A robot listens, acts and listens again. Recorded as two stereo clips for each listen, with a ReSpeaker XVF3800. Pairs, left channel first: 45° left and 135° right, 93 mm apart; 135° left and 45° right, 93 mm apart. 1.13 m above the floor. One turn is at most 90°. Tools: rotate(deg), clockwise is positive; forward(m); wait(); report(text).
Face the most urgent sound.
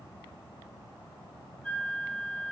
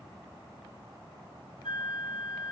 wait()
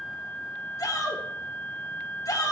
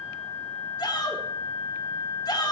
rotate(-90)
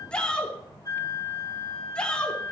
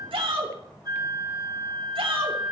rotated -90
rotate(35)
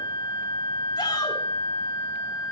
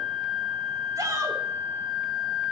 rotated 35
wait()
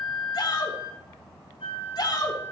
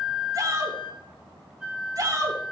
report("Facing the shout, 2 to 4 m away.")